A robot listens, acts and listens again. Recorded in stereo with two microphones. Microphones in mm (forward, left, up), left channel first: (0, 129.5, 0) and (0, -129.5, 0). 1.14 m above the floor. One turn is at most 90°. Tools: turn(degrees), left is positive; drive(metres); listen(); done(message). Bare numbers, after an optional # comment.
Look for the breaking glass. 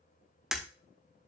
turn(30)
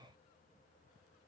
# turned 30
listen()
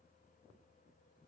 done("I heard breaking glass, but can't make it out now. It was about 30° right or 150° left.")